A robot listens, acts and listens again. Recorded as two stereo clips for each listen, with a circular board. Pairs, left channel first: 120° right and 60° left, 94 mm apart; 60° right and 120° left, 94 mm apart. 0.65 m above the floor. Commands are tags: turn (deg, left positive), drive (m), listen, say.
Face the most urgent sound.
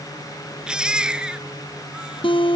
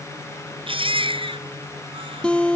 <turn deg="140"/>
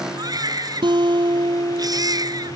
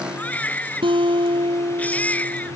<turn deg="15"/>
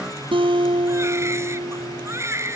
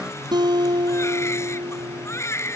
<say>Found it: a baby crying, straight ahead.</say>